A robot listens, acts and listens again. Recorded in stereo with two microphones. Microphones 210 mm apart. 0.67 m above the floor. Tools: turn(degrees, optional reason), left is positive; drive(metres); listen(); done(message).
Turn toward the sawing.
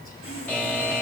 turn(degrees=90)
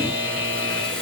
done("Facing the sawing.")